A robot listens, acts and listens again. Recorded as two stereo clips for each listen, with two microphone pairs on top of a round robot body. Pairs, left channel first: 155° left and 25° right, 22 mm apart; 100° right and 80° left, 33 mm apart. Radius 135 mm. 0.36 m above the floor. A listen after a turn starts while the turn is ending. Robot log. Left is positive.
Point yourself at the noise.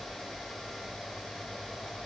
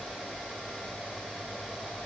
cmd idle
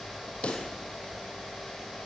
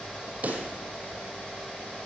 note: The pop: 125° left.
cmd yaw +125
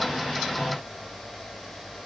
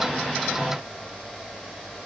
end: Facing where the pop came from. I can't hear it now.